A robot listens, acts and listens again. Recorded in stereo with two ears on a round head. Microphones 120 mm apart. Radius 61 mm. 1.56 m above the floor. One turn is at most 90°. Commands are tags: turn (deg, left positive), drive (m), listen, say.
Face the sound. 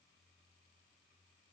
<listen/>
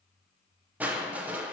<turn deg="-30"/>
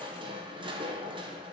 <turn deg="-90"/>
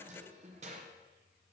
<turn deg="-55"/>
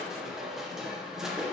<say>Found it: crushing, straight ahead.</say>